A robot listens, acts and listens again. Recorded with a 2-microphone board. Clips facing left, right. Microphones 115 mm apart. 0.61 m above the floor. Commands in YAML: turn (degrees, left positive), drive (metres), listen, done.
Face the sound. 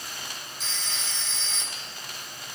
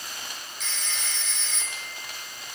turn: 35
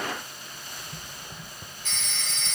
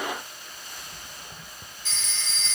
turn: 110
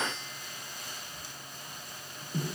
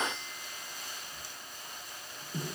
listen: true
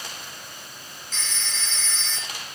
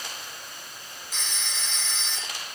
turn: -15
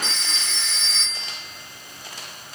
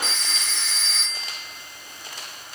done: "Facing the phone ringing."